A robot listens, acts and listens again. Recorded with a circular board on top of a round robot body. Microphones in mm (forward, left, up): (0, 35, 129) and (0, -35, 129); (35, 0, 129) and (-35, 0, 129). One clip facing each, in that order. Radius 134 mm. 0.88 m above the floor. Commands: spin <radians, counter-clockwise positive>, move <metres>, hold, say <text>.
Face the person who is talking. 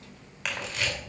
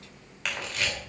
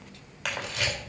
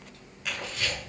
hold
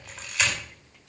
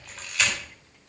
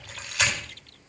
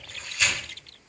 hold
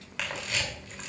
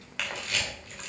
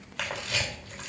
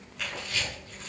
say I can't make out anyone speaking, only a camera shutter.